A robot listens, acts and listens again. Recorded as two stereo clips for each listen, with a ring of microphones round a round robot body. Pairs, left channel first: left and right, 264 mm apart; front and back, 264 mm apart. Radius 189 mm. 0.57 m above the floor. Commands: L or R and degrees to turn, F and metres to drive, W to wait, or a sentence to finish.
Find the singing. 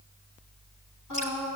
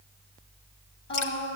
L45
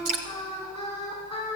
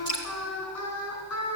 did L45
Facing the singing, 2 to 4 m away.